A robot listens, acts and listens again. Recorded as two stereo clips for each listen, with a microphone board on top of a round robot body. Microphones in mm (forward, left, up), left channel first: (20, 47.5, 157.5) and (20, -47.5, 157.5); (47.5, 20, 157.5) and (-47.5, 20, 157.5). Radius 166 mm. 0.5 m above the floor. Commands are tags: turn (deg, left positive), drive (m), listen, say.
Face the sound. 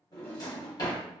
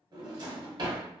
<turn deg="140"/>
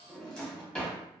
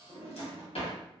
<turn deg="10"/>
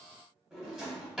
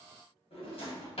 <say>Facing the drawer, 1 to 2 m away.</say>